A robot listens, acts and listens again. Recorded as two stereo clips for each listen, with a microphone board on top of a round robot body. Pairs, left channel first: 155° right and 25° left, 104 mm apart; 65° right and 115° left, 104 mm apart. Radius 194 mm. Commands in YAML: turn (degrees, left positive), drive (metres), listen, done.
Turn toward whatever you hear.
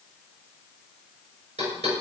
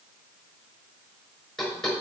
turn: 25
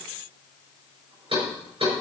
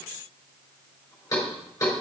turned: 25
done: "Facing the knocking."